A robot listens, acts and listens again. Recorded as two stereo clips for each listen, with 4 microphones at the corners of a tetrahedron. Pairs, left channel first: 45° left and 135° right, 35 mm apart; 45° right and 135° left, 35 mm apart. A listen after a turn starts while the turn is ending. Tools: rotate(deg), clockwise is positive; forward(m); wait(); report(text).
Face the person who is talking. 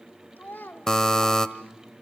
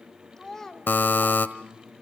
rotate(-30)
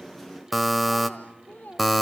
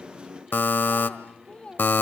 rotate(-10)
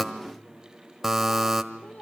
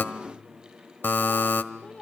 report("Facing the child speaking, 1 to 2 m away.")